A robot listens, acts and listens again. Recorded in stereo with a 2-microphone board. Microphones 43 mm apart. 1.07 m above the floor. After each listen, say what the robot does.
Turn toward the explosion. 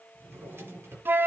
Keep listening.
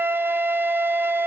Keep listening.
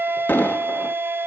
Turn 45° left.
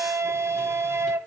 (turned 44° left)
Keep listening.
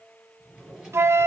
I heard an explosion, but can't make it out now. It was about straight ahead or 90° left.